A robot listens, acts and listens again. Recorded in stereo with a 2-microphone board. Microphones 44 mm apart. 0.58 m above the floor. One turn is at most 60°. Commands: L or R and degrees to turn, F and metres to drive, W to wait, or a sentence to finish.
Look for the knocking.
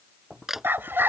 R30
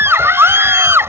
W
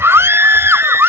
W
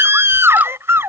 I heard knocking, but can't make it out now. It was about 25° left or 145° right.